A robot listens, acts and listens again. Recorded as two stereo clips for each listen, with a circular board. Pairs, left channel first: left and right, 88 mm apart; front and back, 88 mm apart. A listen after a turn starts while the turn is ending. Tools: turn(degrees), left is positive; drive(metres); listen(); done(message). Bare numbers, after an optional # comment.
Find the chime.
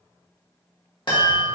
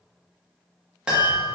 # The chime: 100° left.
turn(100)
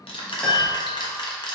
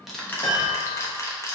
done("Found it: a chime, straight ahead.")